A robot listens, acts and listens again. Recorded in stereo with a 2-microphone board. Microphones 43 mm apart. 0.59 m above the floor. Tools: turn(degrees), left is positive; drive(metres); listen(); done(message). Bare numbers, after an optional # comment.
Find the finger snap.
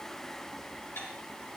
listen()
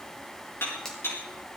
turn(30)
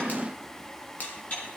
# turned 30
listen()
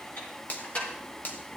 # So it is at 135° left.
turn(135)
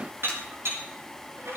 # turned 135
listen()
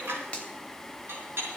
# The finger snap is now 30° left.
turn(30)
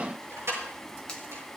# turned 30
listen()
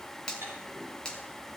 # The finger snap is now 20° left.
turn(20)
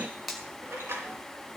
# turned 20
done("Facing the finger snap, 2 to 4 m away.")